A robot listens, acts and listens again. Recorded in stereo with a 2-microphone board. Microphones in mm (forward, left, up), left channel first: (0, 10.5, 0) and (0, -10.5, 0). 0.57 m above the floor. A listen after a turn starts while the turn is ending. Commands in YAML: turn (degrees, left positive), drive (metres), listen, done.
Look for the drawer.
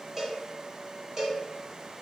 listen: true
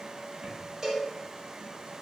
listen: true
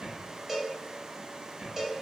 turn: -70
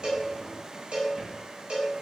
listen: true
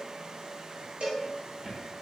turn: -35
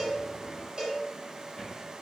turn: 10
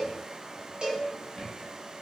done: "Found it: a drawer, straight ahead."